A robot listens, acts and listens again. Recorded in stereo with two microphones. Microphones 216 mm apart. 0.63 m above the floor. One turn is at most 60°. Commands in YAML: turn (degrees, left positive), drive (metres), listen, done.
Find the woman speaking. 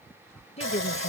turn: 30
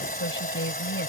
turn: 60
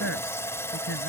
turn: 60
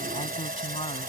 turn: 25
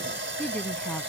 done: "Found it: a woman speaking, straight ahead."